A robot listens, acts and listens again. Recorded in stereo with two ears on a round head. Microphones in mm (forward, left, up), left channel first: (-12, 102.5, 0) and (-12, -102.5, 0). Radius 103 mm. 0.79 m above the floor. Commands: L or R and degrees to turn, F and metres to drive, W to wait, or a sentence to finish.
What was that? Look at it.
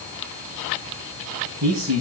R90
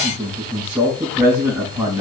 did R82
R10
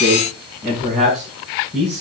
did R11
Found it: a man speaking, straight ahead.